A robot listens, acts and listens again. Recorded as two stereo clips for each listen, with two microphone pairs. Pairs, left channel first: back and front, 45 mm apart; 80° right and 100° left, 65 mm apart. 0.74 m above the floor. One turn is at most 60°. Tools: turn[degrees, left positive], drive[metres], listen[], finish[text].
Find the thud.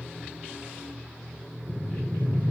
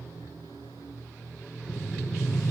Action: listen[]
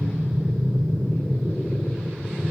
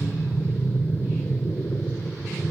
Action: listen[]
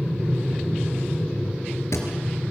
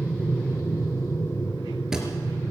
Thought: The thud: 175° right.
Action: turn[-60]
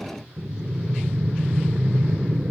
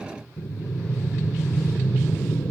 Thought: Nothing new. It was at 115° right.
Action: turn[-60]
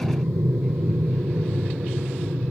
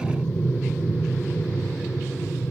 Thought: Nothing new. It was at 55° right.
Action: turn[-55]
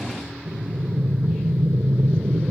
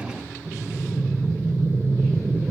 Action: finish[I heard a thud from this way, but can't make it out now.]